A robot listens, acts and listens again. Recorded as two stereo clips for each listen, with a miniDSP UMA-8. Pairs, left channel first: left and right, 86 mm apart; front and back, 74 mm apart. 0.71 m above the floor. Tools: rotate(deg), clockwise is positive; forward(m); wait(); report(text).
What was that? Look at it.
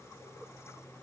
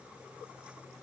wait()
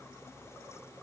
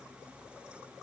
wait()
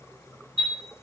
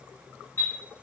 rotate(60)
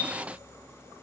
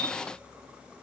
wait()
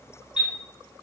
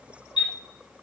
rotate(10)
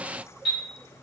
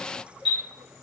report("Facing the chime.")